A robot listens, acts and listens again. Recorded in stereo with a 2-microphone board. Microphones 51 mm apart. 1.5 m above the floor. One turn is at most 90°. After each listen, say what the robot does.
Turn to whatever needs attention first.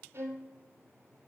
Keep listening.
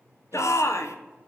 Turn 90° left.
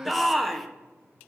Facing the shout.